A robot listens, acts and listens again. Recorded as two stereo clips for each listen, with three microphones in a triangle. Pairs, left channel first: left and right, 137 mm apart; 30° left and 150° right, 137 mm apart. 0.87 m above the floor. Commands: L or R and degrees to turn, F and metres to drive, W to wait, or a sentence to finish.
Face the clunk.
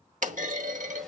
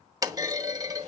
R90
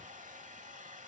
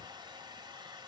I heard a clunk from this way, but can't make it out now.